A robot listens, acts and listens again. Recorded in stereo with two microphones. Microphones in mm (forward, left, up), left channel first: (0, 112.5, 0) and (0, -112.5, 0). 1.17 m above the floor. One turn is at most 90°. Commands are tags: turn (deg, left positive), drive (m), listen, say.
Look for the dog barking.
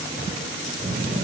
<listen/>
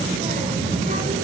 <listen/>
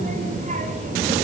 <say>I can't make out a dog barking, only a child speaking.</say>